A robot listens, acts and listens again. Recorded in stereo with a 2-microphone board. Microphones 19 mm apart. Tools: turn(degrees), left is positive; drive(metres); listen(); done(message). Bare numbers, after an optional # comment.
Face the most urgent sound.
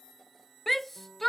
turn(30)
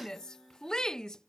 # So it is at 140° left.
turn(140)
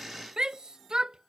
# The shout is now 45° right.
turn(-45)
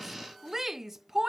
# The shout is now 20° right.
turn(-20)
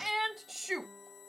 done("Found it: a shout, straight ahead.")